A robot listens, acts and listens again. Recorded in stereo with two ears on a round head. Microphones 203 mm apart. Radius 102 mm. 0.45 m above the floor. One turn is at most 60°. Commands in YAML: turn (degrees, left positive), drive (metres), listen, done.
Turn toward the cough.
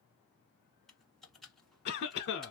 turn: 50
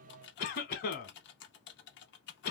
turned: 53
turn: 60
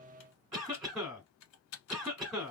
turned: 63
done: "Facing the cough."